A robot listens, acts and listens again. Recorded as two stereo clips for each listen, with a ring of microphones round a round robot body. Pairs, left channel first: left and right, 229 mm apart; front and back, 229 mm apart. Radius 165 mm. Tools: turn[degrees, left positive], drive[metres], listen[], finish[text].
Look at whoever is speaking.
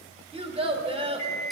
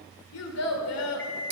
Thought: The child speaking: 25° right.
Action: turn[-25]
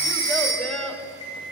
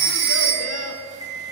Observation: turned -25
Action: finish[Found it: a child speaking, straight ahead, 2 to 4 m away.]